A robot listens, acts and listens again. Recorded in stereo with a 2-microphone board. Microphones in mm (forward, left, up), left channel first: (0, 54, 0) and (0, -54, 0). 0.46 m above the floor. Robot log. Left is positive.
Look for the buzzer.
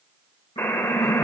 note: The buzzer: about 20° left or 160° left.
cmd yaw +20
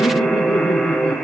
end: Found it: a buzzer, straight ahead, 1 to 2 m away.